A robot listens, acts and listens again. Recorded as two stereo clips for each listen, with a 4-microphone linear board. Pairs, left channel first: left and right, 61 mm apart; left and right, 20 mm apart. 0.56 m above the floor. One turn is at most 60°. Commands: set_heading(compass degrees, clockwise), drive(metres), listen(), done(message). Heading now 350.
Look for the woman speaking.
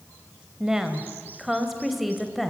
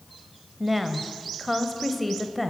set_heading(320)
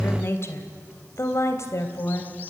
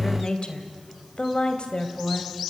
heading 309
set_heading(249)
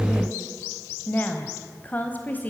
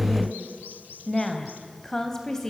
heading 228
set_heading(198)
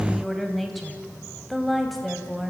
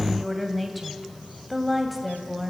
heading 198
done("Found it: a woman speaking, straight ahead.")